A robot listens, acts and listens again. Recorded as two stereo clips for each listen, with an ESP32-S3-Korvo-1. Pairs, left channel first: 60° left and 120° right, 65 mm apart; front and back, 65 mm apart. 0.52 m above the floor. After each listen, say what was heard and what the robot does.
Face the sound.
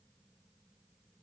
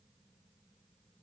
Keep listening.
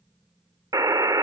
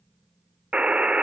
The buzzer: 110° right. Turn 110° right.
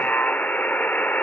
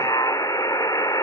Facing the buzzer, under 1 m away.